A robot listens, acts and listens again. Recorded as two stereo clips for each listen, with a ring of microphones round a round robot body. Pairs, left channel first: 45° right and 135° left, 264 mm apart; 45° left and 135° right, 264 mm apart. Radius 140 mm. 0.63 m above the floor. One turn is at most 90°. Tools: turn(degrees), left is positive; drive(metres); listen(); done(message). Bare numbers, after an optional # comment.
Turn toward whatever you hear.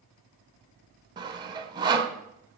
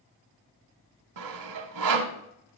# The sawing: 150° right.
turn(-90)
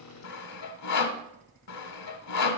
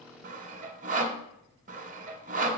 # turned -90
# The sawing is now 75° right.
turn(-75)
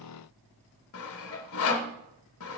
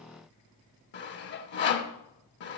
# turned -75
done("Facing the sawing, 1 to 2 m away.")